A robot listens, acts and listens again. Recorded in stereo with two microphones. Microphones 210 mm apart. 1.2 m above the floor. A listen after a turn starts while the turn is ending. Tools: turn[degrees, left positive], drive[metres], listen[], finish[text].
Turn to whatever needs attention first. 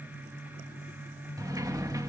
Action: listen[]
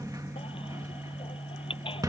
Thought: The baby crying: about 25° left or 155° left.
Action: turn[25]
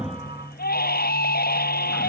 Thought: So it is at 130° left.
Action: turn[130]
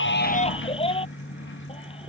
Thought: The baby crying is now 25° left.
Action: turn[25]
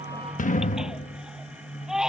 Action: finish[Facing the baby crying.]